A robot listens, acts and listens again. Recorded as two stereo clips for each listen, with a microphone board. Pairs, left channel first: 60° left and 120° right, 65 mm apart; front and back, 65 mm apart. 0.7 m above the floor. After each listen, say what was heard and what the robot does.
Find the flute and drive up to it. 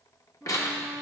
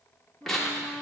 The flute: 160° left. Turn 160° left.
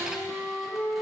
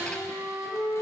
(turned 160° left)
The flute is now 45° left. Turn 45° left.
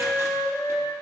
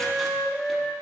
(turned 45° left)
The flute is now 10° right. Turn 10° right.
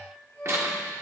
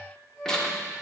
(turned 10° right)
Drive 1.0 m forward.
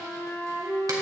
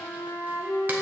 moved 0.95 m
Drive 1.0 m forward.
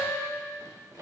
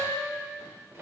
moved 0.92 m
Drive 1.0 m forward.
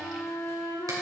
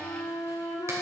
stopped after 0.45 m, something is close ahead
The flute is now 10° left. Turn 10° left.
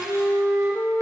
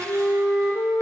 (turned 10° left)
I am next to the flute.